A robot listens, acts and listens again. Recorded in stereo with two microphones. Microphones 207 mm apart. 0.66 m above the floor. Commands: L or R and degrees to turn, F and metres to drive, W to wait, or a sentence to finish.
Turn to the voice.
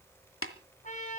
W
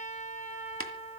W
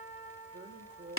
R45
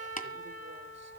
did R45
W
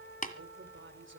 W
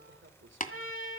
I heard a woman speaking, but can't make it out now. It was about straight ahead or 90° right.